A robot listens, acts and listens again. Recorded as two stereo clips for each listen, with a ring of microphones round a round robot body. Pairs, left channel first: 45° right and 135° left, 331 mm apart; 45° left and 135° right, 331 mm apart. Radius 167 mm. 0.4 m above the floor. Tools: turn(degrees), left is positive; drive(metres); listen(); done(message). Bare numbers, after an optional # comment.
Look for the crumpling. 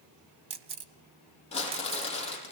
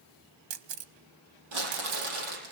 # The crumpling: 115° right.
turn(-115)
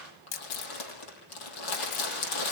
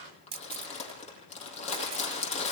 # The crumpling is now 25° right.
turn(-25)
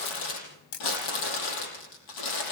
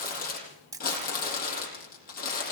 # The crumpling is now 20° right.
turn(-20)
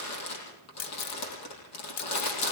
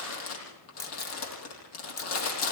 done("Facing the crumpling.")